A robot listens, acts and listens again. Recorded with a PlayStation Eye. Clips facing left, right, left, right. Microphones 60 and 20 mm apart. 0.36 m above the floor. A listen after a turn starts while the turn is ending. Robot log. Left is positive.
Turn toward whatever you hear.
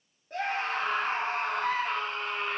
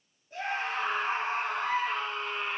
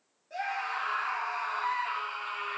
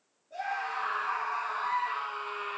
note: The scream: about 60° left or 120° left.
cmd yaw +60
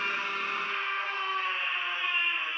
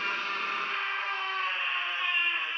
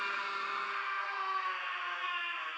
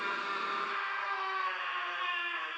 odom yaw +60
end: Facing the scream, over 4 m away.